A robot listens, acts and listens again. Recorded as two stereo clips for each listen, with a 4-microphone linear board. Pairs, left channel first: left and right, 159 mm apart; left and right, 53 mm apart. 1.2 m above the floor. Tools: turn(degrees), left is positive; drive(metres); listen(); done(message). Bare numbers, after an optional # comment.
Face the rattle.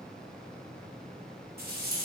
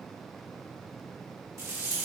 # The rattle: about 75° right or 105° right.
turn(-75)
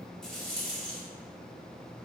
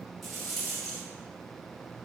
done("Facing the rattle.")